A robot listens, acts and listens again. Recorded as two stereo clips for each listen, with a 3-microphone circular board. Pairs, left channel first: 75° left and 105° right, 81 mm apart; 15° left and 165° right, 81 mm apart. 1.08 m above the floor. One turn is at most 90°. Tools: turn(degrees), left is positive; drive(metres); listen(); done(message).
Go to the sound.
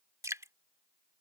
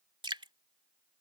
turn(degrees=-90)
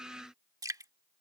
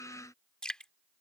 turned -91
turn(degrees=-65)
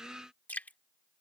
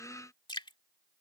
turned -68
drive(metres=1.0)
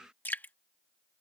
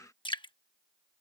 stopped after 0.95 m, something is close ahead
done("Arrived at the dripping, straight ahead.")